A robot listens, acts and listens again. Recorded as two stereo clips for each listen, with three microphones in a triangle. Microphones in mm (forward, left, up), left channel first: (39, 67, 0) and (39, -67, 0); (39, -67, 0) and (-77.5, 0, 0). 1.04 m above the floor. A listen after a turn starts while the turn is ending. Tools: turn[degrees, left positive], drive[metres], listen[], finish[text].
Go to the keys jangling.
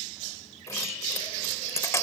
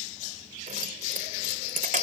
Thought: The keys jangling: 160° left.
Action: turn[160]
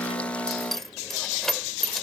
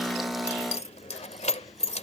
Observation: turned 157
Action: drive[1.0]
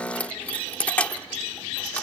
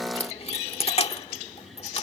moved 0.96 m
Thought: The keys jangling is now 10° left.
Action: turn[10]
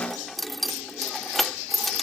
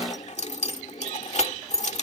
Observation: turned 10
Action: drive[1.0]
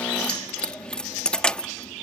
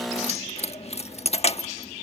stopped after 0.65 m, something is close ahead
Thought: The keys jangling is now 10° left.
Action: turn[10]
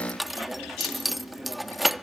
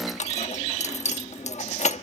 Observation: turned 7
Action: finish[I am next to the keys jangling.]